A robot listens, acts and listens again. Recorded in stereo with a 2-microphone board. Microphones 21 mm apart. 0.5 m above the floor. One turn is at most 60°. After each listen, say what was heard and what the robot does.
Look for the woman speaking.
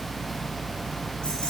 Keep listening.
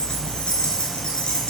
Keep listening.
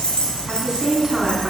The woman speaking: about 20° right or 160° right. Turn 20° right.
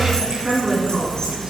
The woman speaking: about 40° right or 140° right. Turn 40° right.
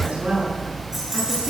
So it is at 105° right. Turn 60° right.
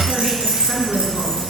The woman speaking is now 45° right. Turn 45° right.
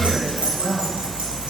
The woman speaking is now 10° right. Turn 10° right.
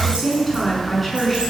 Facing the woman speaking.